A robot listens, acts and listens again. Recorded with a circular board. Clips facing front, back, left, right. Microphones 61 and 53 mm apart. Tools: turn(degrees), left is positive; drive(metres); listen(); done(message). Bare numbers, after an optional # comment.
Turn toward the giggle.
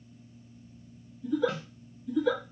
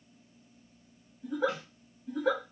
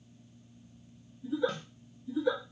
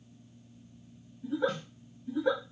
# The giggle: 135° right.
turn(-135)
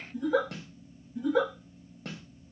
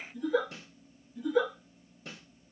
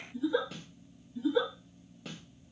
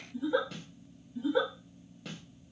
# The giggle is now 30° right.
turn(-30)
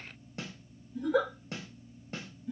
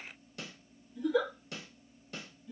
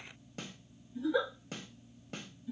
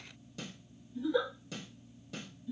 # The giggle is now 15° left.
turn(15)
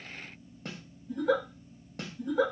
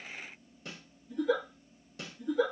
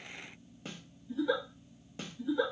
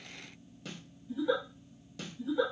done("Facing the giggle, 1 to 2 m away.")